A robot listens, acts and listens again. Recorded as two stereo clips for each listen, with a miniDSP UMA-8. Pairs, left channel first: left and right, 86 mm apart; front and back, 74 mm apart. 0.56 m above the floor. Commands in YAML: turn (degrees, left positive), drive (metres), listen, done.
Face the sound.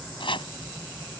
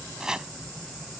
turn: 100
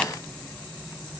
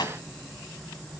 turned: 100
listen: true
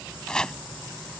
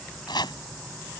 turn: 10
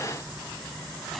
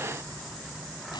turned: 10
listen: true
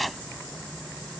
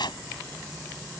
done: "Facing the chopping."